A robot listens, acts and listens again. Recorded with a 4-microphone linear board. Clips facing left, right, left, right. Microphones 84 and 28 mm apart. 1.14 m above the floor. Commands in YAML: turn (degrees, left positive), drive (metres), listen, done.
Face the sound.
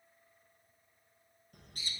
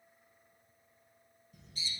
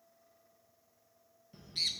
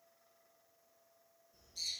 turn: 60
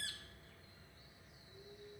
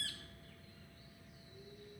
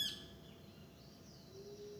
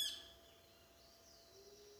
turn: 25
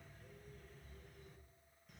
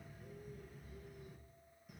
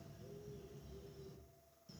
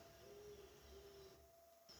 turn: -10
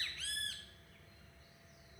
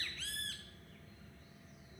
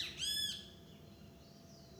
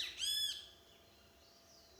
done: "Facing the bird."